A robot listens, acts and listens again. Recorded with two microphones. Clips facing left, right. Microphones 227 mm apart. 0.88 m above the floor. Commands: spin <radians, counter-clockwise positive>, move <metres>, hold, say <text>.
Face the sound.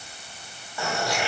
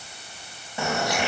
spin -0.35
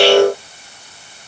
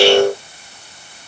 hold
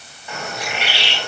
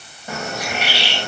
spin -2.44
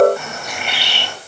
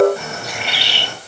spin -0.61
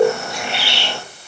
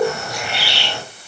spin 0.44
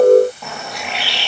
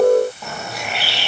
say Facing the bird.